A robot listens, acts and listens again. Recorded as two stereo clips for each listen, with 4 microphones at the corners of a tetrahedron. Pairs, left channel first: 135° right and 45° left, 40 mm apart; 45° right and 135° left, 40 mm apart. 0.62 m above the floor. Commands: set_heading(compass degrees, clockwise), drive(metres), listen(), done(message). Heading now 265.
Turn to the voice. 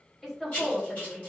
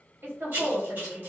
set_heading(130)
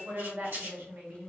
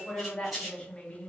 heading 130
set_heading(110)
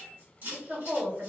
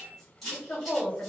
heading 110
done("Facing the woman speaking, 1 to 2 m away.")